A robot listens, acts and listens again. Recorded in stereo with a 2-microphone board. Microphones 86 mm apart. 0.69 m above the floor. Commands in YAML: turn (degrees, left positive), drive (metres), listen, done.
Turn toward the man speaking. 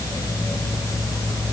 listen: true
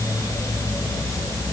listen: true
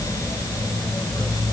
done: "I can't make out a man speaking to turn to."